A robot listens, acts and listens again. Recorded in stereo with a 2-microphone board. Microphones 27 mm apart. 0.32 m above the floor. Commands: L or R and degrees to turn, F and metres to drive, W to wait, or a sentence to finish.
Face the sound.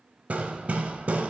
R55
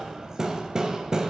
R25
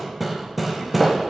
Found it: hammering, straight ahead.